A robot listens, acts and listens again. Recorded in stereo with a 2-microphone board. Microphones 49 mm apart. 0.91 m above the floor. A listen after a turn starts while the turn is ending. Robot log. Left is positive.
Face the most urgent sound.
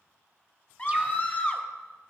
note: The scream: about 30° left or 150° left.
cmd yaw +30
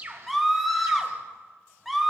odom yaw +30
end: Facing the scream.